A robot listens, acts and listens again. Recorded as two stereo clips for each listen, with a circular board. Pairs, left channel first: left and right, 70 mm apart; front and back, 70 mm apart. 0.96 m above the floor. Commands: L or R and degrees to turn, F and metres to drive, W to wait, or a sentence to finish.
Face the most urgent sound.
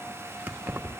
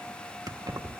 W
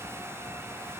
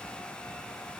W
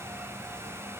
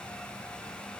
I can't make out anything urgent to turn to.